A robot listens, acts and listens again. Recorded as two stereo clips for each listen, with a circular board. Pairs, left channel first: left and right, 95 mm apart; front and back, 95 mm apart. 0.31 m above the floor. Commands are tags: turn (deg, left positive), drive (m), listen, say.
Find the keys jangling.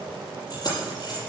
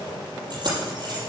<turn deg="135"/>
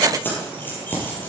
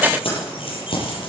<turn deg="20"/>
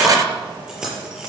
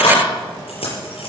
<say>Found it: keys jangling, straight ahead.</say>